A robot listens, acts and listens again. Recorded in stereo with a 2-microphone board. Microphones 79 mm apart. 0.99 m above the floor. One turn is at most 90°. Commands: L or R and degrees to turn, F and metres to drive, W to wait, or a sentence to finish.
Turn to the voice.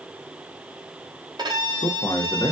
L45
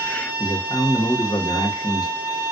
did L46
L80
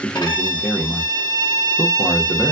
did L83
Found it: a man speaking, straight ahead, 1 to 2 m away.